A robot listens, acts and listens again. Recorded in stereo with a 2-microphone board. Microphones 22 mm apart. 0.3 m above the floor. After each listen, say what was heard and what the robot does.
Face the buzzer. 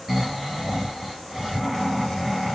Keep listening.
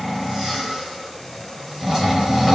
Keep listening.
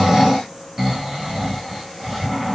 I can't make out a buzzer, only snoring.